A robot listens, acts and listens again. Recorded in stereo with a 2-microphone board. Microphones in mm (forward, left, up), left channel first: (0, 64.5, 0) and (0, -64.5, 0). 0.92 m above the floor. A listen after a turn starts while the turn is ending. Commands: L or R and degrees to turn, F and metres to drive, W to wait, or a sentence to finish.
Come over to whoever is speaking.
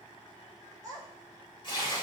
R30
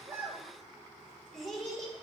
F1.0
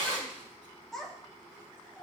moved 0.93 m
F1.0
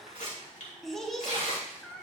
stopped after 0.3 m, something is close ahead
Arrived at the child speaking, straight ahead.